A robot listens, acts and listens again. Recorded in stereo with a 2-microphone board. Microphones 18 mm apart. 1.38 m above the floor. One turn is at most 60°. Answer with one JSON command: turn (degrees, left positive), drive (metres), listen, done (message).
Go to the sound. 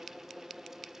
{"listen": true}
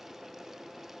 {"listen": true}
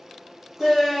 {"turn": -30}
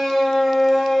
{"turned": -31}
{"turn": 20}
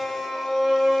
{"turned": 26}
{"drive": 1.0}
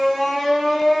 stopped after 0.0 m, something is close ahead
{"done": "Blocked. The shout is further on, straight ahead."}